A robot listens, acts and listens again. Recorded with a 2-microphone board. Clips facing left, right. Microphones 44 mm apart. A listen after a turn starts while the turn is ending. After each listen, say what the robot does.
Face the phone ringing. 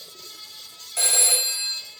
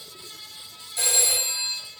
Turn 65° left.
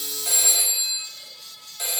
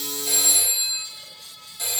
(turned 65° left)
Turn 40° left.
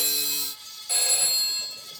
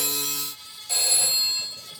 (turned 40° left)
Turn 15° left.
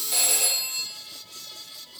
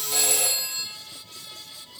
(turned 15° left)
Found it: a phone ringing, straight ahead, 1 to 2 m away.